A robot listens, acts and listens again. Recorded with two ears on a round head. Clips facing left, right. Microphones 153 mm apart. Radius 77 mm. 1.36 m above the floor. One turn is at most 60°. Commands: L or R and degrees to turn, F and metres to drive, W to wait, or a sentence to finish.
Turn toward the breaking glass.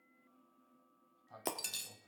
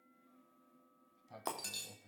L25
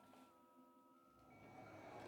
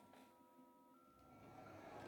W
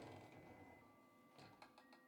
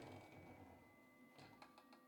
I heard breaking glass, but can't make it out now. It was about straight ahead or 130° left.